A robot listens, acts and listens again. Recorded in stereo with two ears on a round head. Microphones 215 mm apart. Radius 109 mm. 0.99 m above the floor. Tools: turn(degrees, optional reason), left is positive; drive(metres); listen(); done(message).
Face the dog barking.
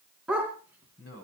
turn(degrees=-30)
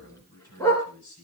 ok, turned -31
turn(degrees=10, reason="So it is at 10° left.")
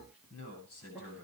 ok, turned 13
listen()
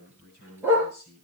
turn(degrees=-10, reason="The dog barking is now 10° right.")
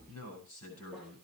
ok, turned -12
listen()
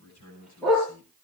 done("Facing the dog barking, over 4 m away.")